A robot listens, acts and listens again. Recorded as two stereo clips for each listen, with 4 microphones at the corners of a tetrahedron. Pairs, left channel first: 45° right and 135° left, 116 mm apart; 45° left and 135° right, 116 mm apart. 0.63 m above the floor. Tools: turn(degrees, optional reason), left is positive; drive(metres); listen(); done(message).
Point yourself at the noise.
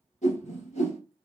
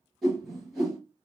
turn(degrees=-45, reason="The whoosh: 45° right.")
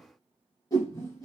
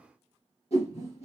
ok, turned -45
turn(degrees=15, reason="The whoosh is now 15° left.")
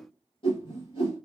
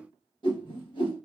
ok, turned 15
done("Found it: a whoosh, straight ahead, 2 to 4 m away.")